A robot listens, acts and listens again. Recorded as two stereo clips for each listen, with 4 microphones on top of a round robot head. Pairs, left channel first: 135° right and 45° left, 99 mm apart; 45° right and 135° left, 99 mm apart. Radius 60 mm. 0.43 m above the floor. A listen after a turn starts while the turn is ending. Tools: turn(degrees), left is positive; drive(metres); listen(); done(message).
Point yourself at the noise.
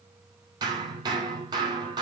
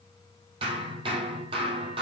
turn(degrees=95)
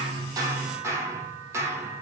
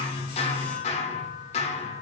turn(degrees=-20)
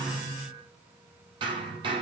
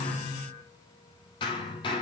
done("Found it: hammering, straight ahead.")